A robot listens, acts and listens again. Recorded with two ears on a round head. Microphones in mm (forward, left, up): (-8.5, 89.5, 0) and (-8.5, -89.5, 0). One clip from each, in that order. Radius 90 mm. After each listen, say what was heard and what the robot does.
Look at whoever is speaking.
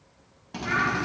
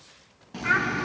The child speaking: about 50° right or 130° right. Turn 50° right.
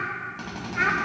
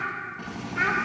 Facing the child speaking, 2 to 4 m away.